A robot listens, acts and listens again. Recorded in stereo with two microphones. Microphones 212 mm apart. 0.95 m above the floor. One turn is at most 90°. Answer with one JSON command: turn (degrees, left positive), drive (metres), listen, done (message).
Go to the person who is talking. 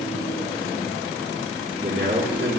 {"turn": -60}
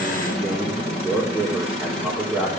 {"drive": 1.0}
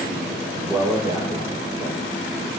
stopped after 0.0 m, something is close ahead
{"done": "Blocked. The man speaking is further on, straight ahead."}